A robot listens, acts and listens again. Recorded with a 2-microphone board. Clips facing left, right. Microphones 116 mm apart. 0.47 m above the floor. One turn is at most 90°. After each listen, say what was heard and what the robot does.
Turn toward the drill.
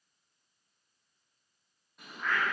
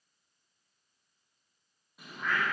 Keep listening.
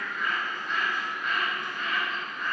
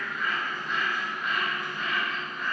Keep listening.
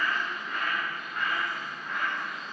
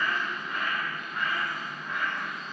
I can't make out a drill, only a bird.